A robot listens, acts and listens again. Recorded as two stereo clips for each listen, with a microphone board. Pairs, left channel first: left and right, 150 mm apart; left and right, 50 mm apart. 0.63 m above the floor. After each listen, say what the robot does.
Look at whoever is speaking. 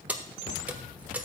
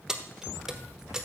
Keep listening.
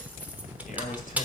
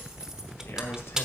Turn 60° left.
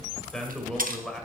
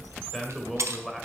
Found it: a man speaking, straight ahead, 2 to 4 m away.